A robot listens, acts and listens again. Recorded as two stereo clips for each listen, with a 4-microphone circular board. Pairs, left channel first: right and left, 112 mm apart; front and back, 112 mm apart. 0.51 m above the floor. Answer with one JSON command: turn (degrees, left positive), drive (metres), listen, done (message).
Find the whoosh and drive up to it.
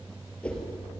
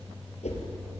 {"turn": -10}
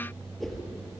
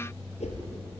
{"drive": 1.0}
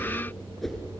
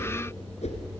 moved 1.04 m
{"drive": 1.0}
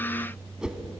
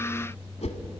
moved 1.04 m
{"turn": 10}
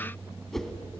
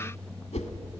{"drive": 1.0}
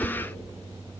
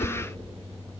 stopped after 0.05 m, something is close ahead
{"turn": -10}
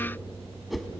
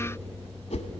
{"done": "I am next to the whoosh."}